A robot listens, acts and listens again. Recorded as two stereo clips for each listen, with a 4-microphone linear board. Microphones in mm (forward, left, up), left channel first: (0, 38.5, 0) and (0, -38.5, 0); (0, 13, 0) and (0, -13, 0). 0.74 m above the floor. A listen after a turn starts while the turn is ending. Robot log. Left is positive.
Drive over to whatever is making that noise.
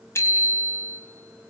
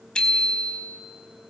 note: The bicycle bell: about 35° left or 145° left.
cmd yaw +35
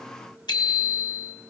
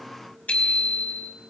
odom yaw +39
note: So it is at 105° left.
cmd yaw +105
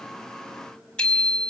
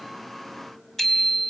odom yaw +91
note: The bicycle bell is now 15° left.
cmd yaw +15
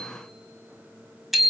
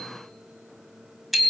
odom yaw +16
cmd fwd 1.0
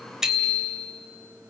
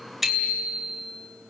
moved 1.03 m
cmd fwd 1.0
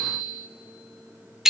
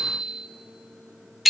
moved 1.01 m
cmd fwd 1.0
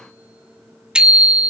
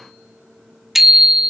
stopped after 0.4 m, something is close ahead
note: The bicycle bell is now 10° right.
cmd yaw -10
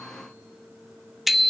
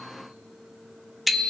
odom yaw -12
end: I am next to the bicycle bell.